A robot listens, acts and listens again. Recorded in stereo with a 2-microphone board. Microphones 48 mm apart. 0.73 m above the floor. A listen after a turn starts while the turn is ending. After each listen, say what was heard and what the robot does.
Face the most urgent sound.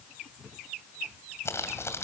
Keep listening.
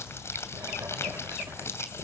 Keep listening.
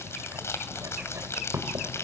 I can't make out anything urgent to turn to.